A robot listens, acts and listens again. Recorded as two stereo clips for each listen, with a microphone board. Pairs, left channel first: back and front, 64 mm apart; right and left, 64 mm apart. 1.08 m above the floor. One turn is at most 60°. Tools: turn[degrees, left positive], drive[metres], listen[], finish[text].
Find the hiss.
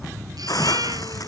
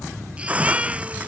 Thought: The hiss: 155° left.
Action: turn[60]
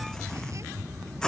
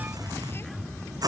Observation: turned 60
Thought: The hiss is now 100° left.
Action: turn[60]
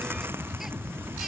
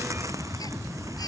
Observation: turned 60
Thought: Nothing new. It was at 40° left.
Action: turn[40]
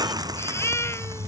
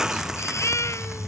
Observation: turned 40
Action: finish[Facing the hiss.]